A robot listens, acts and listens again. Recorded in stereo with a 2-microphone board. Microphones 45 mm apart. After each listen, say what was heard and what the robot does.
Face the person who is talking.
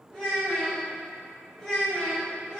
The child speaking: about 30° left or 150° left. Turn 30° left.
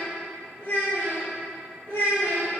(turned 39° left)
So it is at 105° left. Turn 105° left.
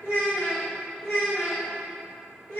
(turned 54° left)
The child speaking is now 45° left. Turn 45° left.
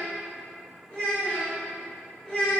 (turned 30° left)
The child speaking is now 15° left. Turn 15° left.
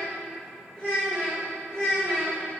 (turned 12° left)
Facing the child speaking, 2 to 4 m away.